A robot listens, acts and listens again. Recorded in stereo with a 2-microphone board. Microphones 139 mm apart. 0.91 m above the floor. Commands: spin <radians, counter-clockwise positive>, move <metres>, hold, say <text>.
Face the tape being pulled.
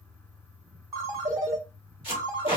spin 0.70
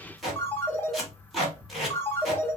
say Facing the tape being pulled, 2 to 4 m away.